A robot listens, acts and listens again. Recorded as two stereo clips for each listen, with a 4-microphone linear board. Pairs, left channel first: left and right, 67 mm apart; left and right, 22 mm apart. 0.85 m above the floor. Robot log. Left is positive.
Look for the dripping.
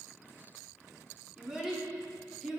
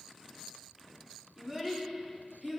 cmd idle
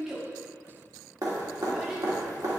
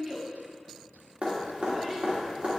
note: The dripping: about 55° right or 125° right.
cmd yaw -55
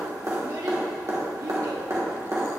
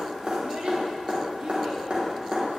note: So it is at 60° right.
cmd yaw -60
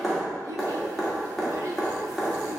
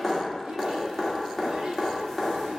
end: Found it: dripping, straight ahead, 1 to 2 m away.